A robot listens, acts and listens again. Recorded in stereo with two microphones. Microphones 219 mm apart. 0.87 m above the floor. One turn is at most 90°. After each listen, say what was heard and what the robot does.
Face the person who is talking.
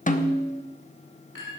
Keep listening.
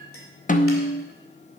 Keep listening.
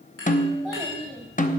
Turn 30° left.
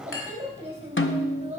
So it is at 25° right. Turn 25° right.
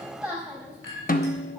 Facing the child speaking.